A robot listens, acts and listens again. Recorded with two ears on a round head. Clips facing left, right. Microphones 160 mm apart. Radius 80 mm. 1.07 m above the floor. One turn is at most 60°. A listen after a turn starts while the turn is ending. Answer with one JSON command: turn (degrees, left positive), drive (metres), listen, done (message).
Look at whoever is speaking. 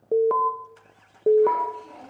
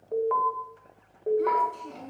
{"turn": -50}
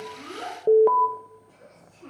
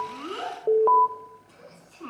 {"turn": -60}
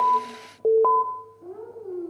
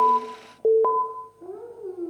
{"turn": -45}
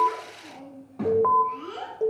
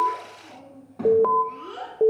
{"done": "Found it: a child speaking, straight ahead, over 4 m away."}